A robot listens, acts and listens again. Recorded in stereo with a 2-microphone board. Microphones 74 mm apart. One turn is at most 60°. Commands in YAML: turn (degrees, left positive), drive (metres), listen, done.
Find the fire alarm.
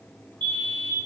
turn: -60
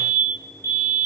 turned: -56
turn: -45
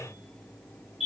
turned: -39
done: "Facing the fire alarm."